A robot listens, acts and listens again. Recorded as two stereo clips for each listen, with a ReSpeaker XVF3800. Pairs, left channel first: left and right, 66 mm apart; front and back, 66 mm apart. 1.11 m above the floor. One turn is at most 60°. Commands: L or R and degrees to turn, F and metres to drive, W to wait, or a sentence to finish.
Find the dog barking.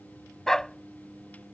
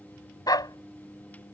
L10
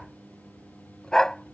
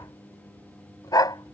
L10
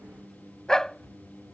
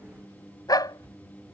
L10
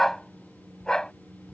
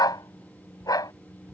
L10
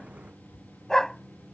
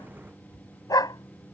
L10
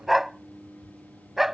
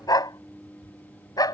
Found it: a dog barking, straight ahead.